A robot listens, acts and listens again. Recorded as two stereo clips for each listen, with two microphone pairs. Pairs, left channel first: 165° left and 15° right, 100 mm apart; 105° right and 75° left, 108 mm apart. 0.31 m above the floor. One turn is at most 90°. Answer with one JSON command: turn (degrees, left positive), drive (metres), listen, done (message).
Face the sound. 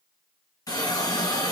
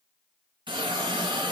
{"turn": 90}
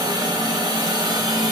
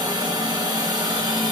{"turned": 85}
{"turn": 25}
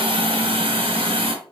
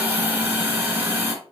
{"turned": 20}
{"done": "Found it: a hiss, straight ahead, 2 to 4 m away."}